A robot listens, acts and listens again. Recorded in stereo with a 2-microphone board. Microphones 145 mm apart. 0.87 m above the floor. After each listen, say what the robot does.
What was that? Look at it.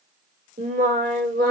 Turn 75° right.
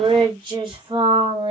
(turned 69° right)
Turn 40° right.
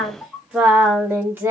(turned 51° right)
Turn 15° right.
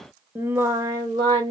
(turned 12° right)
Turn 30° right.
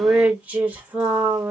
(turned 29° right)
Turn 10° right.
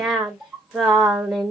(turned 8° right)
Found it: singing, straight ahead, 1 to 2 m away.